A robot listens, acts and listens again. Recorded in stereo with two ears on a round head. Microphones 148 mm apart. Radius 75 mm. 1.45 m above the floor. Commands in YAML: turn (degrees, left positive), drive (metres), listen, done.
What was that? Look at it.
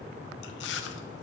turn: 90
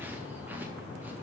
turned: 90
listen: true
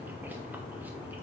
listen: true
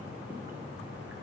done: "Facing where the chewing came from. I can't hear it now."